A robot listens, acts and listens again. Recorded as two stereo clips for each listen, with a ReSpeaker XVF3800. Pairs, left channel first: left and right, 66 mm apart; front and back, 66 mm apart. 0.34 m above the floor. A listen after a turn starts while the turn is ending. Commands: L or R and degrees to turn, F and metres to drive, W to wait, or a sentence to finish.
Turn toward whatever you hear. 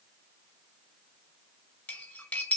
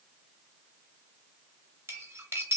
L145
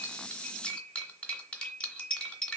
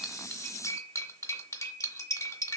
L15
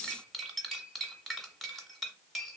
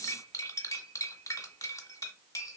Facing the cutlery clinking, under 1 m away.